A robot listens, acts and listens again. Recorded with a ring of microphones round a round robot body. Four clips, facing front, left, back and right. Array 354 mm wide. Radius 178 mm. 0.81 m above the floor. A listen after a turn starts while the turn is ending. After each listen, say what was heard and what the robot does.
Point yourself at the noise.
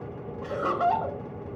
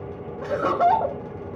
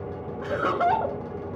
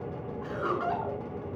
The laughter: 105° left. Turn 105° left.
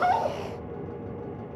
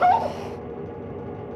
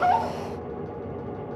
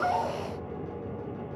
Keep listening.
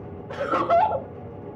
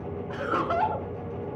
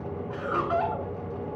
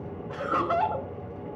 Facing the laughter, 1 to 2 m away.